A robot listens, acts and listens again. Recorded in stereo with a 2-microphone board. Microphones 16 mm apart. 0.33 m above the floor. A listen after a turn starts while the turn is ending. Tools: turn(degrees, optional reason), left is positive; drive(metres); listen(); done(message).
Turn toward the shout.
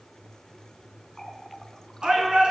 turn(degrees=-55, reason="The shout: about 55° right or 125° right.")
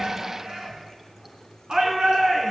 turn(degrees=-60, reason="So it is at 60° right.")
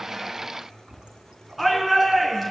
done("Facing the shout, over 4 m away.")